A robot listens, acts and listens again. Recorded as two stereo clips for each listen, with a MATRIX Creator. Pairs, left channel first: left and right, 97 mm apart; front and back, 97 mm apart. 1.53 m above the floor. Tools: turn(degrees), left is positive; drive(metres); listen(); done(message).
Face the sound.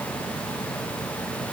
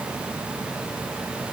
listen()
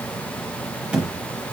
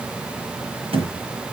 turn(degrees=-165)
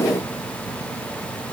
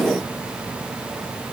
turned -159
turn(degrees=-10)
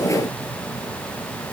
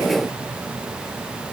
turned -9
done("I heard a thud from this way, but can't make it out now.")